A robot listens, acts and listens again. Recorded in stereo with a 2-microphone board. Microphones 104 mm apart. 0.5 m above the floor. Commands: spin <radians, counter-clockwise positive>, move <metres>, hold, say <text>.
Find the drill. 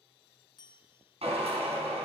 spin -1.31
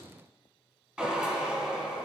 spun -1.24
say Found it: a drill, straight ahead.